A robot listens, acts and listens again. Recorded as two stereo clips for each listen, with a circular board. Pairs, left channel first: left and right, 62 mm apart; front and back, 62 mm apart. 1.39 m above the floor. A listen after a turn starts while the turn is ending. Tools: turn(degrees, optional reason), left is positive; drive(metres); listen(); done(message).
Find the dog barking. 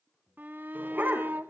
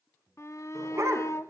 turn(degrees=-145, reason="The dog barking: 145° right.")
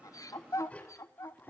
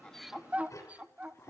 turn(degrees=35, reason="The dog barking is now 35° left.")
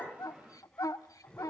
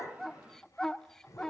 listen()
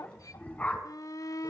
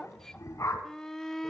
turn(degrees=30, reason="The dog barking is now 30° left.")
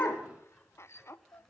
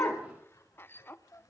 listen()
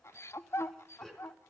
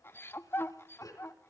listen()
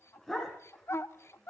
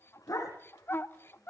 done("Found it: a dog barking, straight ahead, 2 to 4 m away.")